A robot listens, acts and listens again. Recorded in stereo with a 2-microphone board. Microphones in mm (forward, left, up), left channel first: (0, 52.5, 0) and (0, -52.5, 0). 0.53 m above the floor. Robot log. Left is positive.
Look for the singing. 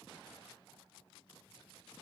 cmd idle
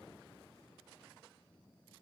cmd idle
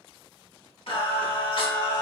note: The singing: about 50° left or 130° left.
cmd yaw +50
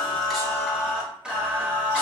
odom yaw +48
note: So it is at 10° right.
cmd yaw -10
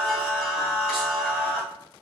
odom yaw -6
end: Found it: singing, straight ahead, 1 to 2 m away.